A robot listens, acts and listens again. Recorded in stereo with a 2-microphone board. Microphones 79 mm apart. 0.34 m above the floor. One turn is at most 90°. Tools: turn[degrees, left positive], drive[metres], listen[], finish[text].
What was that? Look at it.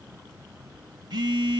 Action: turn[-90]
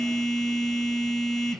Action: finish[Facing the phone buzzing.]